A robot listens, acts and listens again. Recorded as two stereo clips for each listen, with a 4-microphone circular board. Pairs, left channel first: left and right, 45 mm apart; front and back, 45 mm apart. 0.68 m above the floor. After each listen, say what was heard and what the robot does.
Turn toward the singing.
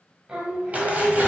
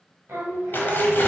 The singing: 150° right. Turn 150° right.
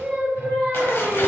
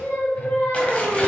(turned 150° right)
The singing is now 40° right. Turn 40° right.
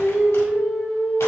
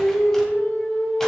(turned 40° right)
The singing is now 15° right. Turn 15° right.
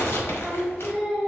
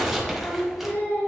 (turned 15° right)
Facing the singing, 2 to 4 m away.